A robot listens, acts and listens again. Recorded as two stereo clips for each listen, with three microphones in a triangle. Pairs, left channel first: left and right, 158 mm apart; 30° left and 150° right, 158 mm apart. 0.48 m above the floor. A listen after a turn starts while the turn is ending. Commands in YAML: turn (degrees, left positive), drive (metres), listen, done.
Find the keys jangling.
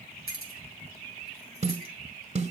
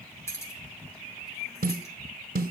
turn: 100
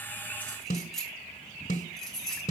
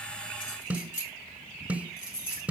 done: "Facing the keys jangling, 2 to 4 m away."